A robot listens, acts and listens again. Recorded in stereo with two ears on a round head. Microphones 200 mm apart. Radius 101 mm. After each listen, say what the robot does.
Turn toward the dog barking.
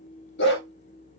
Turn 55° left.
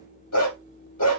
Turn 85° left.
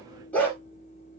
Turn 10° left.
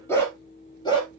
Turn 20° left.
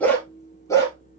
Turn 15° left.
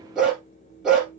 Found it: a dog barking, straight ahead, 2 to 4 m away.